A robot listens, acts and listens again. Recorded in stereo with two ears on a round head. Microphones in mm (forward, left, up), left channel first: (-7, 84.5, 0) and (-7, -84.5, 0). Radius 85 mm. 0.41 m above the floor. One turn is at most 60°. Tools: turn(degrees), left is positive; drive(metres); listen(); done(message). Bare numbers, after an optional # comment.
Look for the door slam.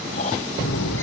turn(60)
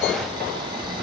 # Nothing new. It was at 30° left.
turn(30)
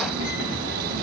done("Facing where the door slam came from. I can't hear it now.")